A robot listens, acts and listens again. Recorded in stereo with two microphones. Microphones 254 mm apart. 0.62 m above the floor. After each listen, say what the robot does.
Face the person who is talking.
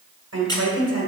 Turn 90° right.
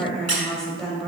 Found it: a woman speaking, straight ahead.